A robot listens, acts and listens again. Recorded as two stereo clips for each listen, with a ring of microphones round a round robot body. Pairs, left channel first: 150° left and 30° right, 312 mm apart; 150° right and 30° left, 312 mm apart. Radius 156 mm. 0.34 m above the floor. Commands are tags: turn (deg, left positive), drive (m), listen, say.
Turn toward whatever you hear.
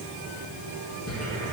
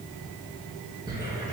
<turn deg="105"/>
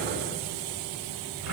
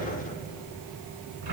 <turn deg="10"/>
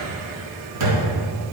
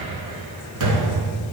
<say>Facing the cupboard door, 2 to 4 m away.</say>